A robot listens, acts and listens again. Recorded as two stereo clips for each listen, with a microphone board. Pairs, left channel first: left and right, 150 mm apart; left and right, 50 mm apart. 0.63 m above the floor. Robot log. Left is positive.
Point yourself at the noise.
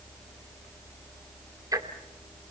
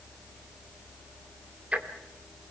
note: The ticking: about 25° right or 155° right.
cmd yaw -25
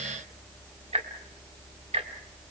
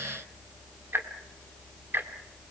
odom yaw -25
note: So it is at 125° right.
cmd yaw -125
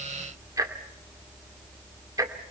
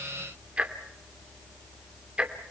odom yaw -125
note: The ticking is now 25° right.
cmd yaw -25
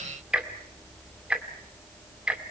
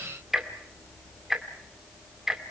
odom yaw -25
note: The ticking is now 10° right.
cmd yaw -10
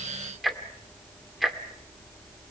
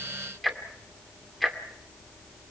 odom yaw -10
end: Found it: ticking, straight ahead.